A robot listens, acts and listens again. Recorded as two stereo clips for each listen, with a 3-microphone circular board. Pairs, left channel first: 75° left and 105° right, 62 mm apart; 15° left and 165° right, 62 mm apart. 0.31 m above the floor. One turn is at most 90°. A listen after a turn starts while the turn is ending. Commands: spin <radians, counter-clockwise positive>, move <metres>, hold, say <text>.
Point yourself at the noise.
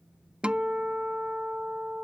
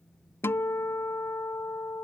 spin -0.52
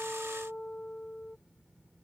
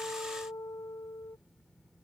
say Facing the guitar.